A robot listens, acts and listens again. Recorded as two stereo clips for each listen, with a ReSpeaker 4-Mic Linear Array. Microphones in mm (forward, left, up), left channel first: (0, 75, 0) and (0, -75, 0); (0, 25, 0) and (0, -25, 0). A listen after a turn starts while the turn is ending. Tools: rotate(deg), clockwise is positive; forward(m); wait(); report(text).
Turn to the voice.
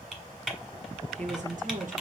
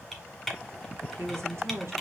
rotate(60)
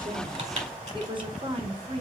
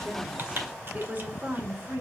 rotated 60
rotate(45)
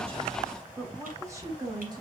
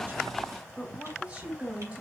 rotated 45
rotate(25)
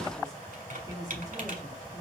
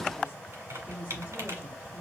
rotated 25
rotate(25)
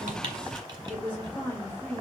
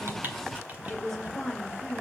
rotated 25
rotate(-10)
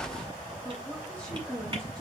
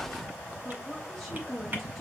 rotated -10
report("Facing the woman speaking, 2 to 4 m away.")